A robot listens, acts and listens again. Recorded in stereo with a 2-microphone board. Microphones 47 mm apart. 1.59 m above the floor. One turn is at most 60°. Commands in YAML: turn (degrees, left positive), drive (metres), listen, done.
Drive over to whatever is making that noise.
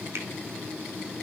listen: true
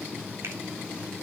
listen: true
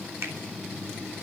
turn: -60
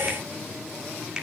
turn: -15
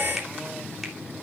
listen: true
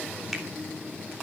listen: true
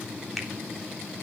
done: "I heard a finger snap from this way, but can't make it out now. I did not reach it."